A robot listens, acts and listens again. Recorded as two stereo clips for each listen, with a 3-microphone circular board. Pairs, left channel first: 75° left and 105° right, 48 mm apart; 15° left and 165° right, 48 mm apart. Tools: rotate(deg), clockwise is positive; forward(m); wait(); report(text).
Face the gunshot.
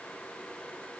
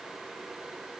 wait()
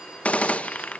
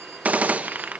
rotate(-135)
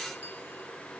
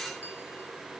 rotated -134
report("Facing where the gunshot came from. I can't hear it now.")